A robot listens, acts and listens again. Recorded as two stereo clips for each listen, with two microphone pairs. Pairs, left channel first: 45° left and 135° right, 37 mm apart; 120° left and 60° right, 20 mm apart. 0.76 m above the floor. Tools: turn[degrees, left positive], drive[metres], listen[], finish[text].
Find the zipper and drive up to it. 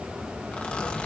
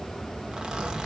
Thought: The zipper: 15° right.
Action: turn[-15]
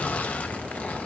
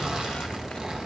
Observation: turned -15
Action: listen[]
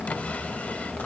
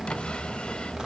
Action: listen[]
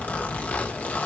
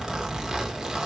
Action: drive[1.0]
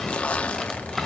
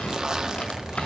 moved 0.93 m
Action: drive[1.0]
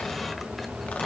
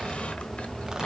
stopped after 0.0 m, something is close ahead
Action: listen[]
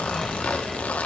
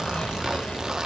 Action: finish[Arrived at the zipper, straight ahead.]